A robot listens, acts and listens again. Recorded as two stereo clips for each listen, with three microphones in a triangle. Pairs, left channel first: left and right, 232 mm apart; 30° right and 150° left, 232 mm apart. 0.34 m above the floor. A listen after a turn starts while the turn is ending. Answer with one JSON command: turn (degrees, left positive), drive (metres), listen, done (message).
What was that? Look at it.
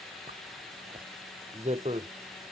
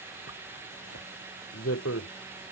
{"turn": -30}
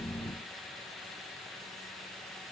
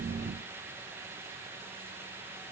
{"listen": true}
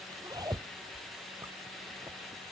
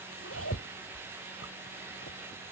{"turn": -15}
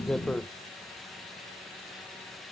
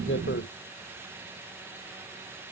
{"listen": true}
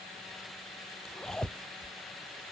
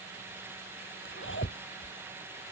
{"done": "Found it: a zipper, straight ahead."}